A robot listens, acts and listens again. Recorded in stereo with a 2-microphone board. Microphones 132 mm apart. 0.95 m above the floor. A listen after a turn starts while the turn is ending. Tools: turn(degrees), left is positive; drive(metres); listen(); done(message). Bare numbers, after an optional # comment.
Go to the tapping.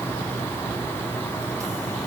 listen()
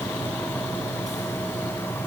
listen()
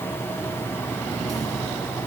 done("I can't make out tapping to turn to.")